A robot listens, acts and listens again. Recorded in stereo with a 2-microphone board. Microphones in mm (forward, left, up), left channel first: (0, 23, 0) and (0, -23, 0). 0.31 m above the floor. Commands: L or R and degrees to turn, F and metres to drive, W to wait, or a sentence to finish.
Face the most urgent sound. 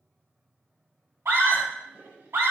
R65
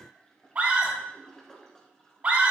R35
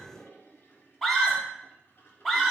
L10
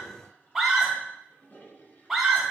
Found it: a scream, straight ahead, 2 to 4 m away.